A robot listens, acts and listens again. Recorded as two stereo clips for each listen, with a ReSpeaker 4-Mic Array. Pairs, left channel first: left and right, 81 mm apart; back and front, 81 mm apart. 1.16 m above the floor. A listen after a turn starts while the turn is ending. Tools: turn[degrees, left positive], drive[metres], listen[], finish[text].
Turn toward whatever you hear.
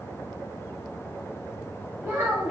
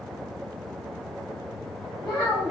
Thought: The child speaking: 155° right.
Action: turn[-155]
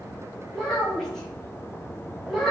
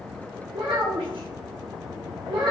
Action: finish[Found it: a child speaking, straight ahead, 1 to 2 m away.]